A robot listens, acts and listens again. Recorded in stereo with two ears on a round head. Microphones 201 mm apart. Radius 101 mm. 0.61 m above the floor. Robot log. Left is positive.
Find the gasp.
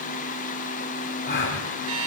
note: The gasp: about 35° left or 145° left.
cmd yaw +35
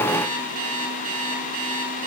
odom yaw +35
cmd idle
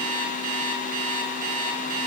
end: I heard a gasp, but can't make it out now. It was about straight ahead or 110° left.